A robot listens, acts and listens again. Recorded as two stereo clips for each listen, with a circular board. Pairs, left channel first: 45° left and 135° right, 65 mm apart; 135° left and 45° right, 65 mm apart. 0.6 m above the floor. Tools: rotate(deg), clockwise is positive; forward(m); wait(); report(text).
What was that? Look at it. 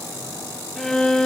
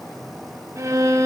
rotate(35)
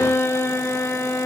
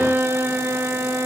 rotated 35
report("Facing the violin.")